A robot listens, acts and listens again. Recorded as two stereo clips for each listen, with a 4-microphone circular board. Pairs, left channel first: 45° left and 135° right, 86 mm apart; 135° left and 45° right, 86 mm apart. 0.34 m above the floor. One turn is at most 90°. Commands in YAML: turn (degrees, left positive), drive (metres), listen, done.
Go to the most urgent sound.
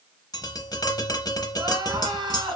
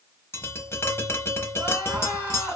turn: -90
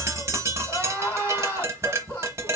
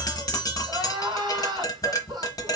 turn: -15
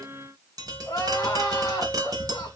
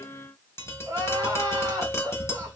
drive: 1.0
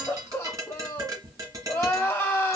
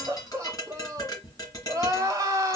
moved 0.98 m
drive: 1.0
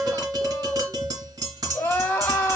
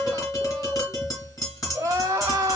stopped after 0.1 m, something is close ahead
done: "Arrived at the crying, straight ahead."